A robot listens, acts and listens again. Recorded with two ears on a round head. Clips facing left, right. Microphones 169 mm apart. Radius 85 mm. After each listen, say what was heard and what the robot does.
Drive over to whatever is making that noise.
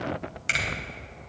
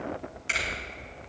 The finger snap: about 70° left or 110° left. Turn 70° left.
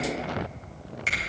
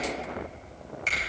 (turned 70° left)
Drive 1.0 m forward.
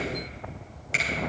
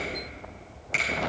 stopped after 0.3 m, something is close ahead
Something is in my way. I am facing the finger snap but have not reached it.